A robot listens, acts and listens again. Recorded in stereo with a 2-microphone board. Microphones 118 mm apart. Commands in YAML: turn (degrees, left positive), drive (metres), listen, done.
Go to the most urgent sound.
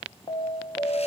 turn: 45
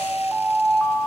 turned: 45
drive: 1.0
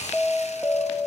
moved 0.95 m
turn: 10
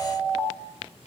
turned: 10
drive: 1.0
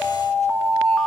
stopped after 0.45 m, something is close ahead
turn: 10
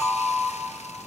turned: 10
done: "Arrived at the alarm, straight ahead."